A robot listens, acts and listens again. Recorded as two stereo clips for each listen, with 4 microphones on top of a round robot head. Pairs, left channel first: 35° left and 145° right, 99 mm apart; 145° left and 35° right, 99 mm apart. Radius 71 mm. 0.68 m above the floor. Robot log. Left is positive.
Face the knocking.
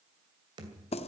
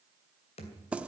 note: The knocking: 165° left.
cmd yaw +165
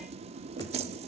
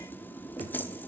cmd idle
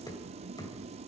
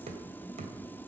note: The knocking is now 20° right.
cmd yaw -20
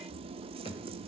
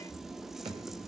end: Found it: knocking, straight ahead, 2 to 4 m away.